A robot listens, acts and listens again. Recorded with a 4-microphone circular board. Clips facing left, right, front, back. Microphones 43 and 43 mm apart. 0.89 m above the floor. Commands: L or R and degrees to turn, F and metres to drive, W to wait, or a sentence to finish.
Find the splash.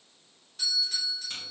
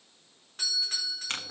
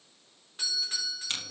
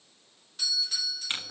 W
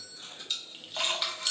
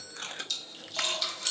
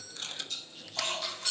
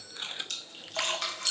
L155
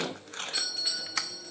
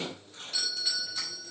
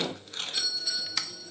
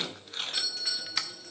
I heard a splash from this way, but can't make it out now.